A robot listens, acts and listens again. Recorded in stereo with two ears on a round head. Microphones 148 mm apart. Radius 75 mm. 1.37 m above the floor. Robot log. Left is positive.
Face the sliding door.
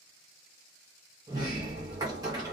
note: The sliding door: about 25° right or 155° right.
cmd yaw -25
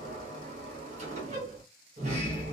note: So it is at 130° right.
cmd yaw -130
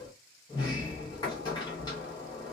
note: The sliding door is now 30° left.
cmd yaw +30
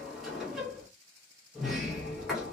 end: Found it: a sliding door, straight ahead.